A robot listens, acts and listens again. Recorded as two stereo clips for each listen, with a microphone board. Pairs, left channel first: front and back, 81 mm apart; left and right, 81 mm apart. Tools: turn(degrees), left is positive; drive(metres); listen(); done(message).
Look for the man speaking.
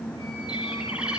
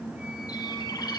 listen()
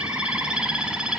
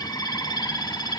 listen()
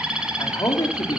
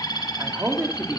turn(degrees=-30)
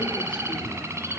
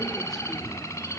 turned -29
listen()
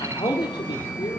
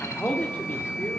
turn(degrees=20)
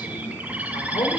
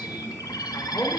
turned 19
turn(degrees=15)
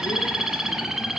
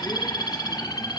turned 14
listen()
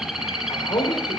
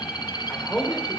done("Facing the man speaking, 2 to 4 m away.")